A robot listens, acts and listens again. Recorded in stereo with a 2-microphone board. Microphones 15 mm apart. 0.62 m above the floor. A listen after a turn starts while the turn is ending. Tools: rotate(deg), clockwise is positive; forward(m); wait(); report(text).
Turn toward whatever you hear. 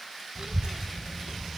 rotate(70)
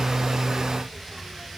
rotate(25)
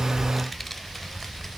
rotate(-20)
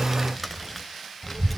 rotate(-15)
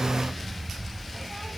rotate(-10)
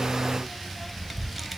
report("Facing the child speaking, 2 to 4 m away.")